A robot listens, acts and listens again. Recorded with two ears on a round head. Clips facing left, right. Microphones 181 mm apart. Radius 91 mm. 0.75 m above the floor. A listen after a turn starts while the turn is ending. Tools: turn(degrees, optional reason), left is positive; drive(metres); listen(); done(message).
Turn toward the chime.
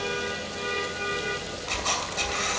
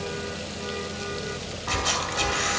turn(degrees=-65, reason="The chime: about 65° right or 115° right.")
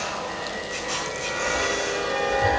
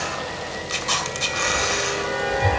done("Facing the chime, under 1 m away.")